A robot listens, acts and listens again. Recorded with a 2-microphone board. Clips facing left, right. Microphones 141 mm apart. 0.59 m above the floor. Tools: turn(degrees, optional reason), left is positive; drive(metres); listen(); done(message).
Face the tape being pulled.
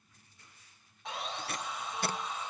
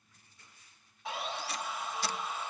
turn(degrees=55, reason="The tape being pulled: about 55° left or 125° left.")
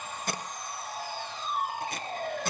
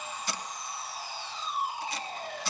turn(degrees=60, reason="So it is at 60° left.")
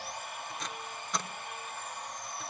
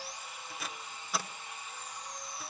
done("Found it: tape being pulled, straight ahead.")